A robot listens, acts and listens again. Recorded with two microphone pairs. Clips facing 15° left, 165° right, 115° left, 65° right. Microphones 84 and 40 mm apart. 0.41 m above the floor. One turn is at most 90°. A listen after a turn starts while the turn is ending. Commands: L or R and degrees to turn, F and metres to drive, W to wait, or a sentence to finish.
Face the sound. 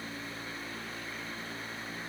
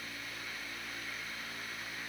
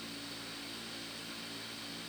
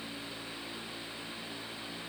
W
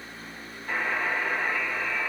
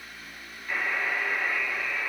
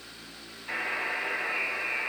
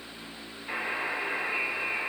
L30
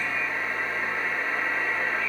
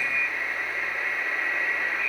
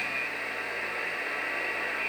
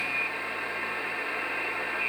Found it: a buzzer, straight ahead, 2 to 4 m away.